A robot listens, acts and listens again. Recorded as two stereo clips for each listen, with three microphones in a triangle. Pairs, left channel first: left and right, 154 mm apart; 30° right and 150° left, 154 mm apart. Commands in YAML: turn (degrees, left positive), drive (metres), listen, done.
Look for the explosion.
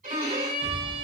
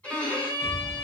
turn: -50
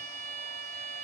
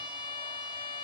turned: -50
done: "I heard an explosion from this way, but can't make it out now."